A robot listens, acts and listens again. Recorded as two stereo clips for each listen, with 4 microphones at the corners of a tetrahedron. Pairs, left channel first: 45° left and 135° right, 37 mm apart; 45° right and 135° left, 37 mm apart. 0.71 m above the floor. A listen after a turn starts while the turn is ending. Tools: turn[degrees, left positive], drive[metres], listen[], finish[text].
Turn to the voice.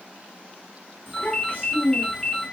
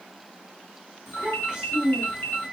Thought: The child speaking: 70° left.
Action: turn[70]
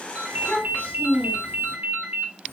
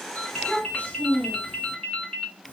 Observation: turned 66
Action: finish[Found it: a child speaking, straight ahead.]